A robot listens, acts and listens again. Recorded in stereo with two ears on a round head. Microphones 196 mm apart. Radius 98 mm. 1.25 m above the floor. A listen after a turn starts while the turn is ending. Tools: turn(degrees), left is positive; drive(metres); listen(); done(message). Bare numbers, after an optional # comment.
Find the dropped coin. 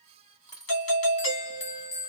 # The dropped coin: about 20° left or 160° left.
turn(20)
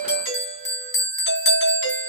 listen()
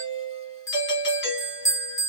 done("I heard a dropped coin, but can't make it out now. It was about straight ahead or 140° left.")